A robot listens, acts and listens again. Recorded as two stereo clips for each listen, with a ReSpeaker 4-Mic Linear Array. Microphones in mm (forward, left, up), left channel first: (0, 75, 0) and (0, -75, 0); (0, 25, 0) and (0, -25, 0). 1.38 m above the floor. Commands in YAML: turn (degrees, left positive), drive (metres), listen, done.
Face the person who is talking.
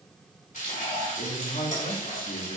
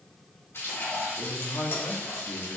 turn: 70
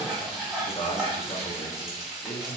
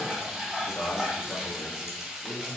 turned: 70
turn: 40
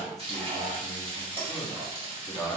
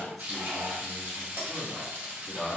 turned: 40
done: "Facing the man speaking."